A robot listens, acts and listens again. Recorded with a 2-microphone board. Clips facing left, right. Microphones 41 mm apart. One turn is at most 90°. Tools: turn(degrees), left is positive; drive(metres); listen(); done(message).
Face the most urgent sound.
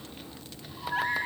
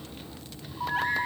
turn(degrees=-65)
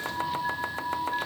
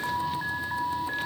turn(degrees=-45)
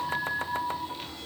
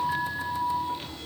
done("Found it: an alarm, straight ahead, over 4 m away.")